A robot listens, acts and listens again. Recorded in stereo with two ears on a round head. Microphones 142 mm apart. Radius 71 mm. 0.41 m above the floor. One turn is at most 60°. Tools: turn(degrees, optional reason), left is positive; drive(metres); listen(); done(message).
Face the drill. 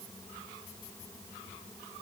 listen()
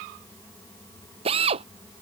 turn(degrees=-40, reason="The drill: about 40° right or 140° right.")
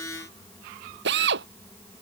turn(degrees=-60, reason="So it is at 100° right.")
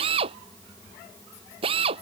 turn(degrees=-35, reason="The drill is now 35° right.")
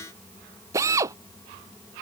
turn(degrees=-20, reason="The drill is now 20° right.")
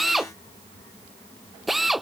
done("Found it: a drill, straight ahead.")